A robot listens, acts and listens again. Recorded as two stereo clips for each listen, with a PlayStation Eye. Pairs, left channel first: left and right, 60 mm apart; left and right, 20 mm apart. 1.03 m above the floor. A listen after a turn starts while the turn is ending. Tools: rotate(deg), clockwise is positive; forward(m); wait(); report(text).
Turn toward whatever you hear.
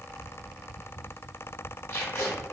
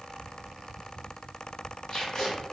rotate(-30)
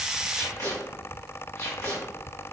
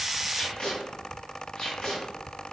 rotate(-120)
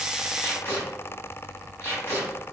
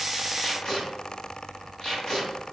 rotate(-45)
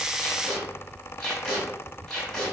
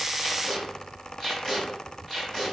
rotate(-10)
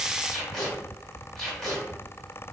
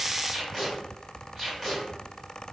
report("Facing the tape being pulled.")